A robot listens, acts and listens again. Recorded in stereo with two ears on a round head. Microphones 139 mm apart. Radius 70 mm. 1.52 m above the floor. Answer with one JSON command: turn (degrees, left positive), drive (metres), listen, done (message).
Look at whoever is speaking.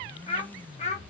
{"turn": 45}
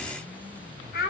{"turn": 65}
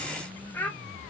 {"turn": 10}
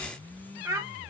{"turn": -20}
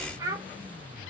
{"turn": -20}
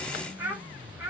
{"turn": -15}
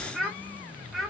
{"done": "Facing the child speaking, 1 to 2 m away."}